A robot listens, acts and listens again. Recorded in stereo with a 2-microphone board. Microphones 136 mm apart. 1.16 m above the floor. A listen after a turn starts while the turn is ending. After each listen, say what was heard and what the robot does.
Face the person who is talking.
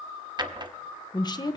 The woman speaking: about 30° left or 150° left. Turn 30° left.
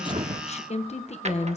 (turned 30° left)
So it is at 115° left. Turn 115° left.
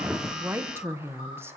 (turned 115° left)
The woman speaking is now 20° right. Turn 20° right.
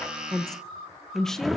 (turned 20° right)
Found it: a woman speaking, straight ahead, 1 to 2 m away.